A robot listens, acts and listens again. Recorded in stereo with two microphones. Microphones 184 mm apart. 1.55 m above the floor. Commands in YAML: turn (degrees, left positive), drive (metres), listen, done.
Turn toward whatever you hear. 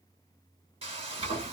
turn: -30
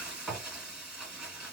done: "Facing the frying."